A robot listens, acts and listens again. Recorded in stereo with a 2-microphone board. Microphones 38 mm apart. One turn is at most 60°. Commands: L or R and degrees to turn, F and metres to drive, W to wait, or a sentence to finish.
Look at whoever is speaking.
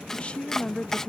L35
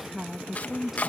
Found it: a woman speaking, straight ahead.